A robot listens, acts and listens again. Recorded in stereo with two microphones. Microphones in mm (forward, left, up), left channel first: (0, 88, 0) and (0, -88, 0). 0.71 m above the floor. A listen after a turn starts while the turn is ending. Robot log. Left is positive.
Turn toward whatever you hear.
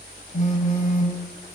note: The phone buzzing: about 40° left or 140° left.
cmd yaw +40
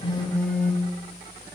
note: So it is at 10° left.
cmd yaw +10
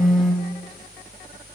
end: Found it: a phone buzzing, straight ahead.